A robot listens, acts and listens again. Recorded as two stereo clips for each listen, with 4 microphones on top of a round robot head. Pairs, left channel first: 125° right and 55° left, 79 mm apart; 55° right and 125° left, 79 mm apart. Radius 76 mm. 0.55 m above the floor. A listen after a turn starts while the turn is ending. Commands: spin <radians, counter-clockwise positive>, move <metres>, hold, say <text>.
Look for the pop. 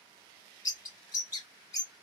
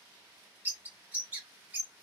hold
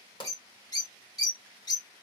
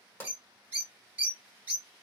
spin -2.01
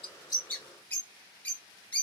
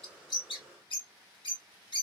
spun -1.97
say Facing where the pop came from. I can't hear it now.